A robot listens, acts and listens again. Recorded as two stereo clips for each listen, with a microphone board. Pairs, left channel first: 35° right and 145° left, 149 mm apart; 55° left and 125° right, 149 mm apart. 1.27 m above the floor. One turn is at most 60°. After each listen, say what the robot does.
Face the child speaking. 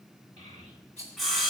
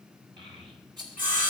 Turn 60° right.
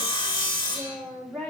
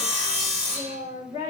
Turn 60° right.
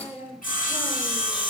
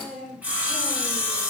Turn 60° right.
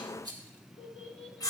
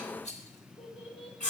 Turn 10° left.
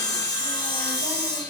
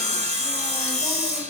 Keep listening.
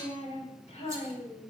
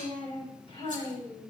Found it: a child speaking, straight ahead, 2 to 4 m away.